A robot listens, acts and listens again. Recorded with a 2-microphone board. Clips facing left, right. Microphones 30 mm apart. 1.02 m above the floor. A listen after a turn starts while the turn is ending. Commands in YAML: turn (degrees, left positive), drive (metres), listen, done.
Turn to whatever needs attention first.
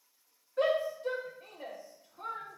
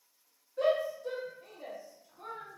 turn: 55
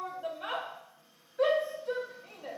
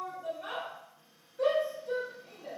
turn: 70
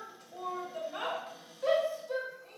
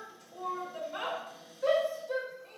done: "Found it: a shout, straight ahead."